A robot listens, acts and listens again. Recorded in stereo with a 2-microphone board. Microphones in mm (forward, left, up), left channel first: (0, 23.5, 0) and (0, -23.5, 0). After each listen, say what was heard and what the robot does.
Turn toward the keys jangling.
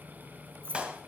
The keys jangling: about 45° right or 135° right. Turn 45° right.
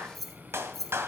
So it is at 10° left. Turn 10° left.
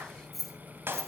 The keys jangling is now 10° left. Turn 10° left.
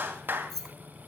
The keys jangling is now 10° left. Turn 10° left.
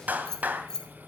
The keys jangling is now 20° left. Turn 20° left.
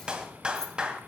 Keep listening.
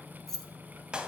The keys jangling is now 10° left. Turn 10° left.
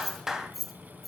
Found it: keys jangling, straight ahead, 2 to 4 m away.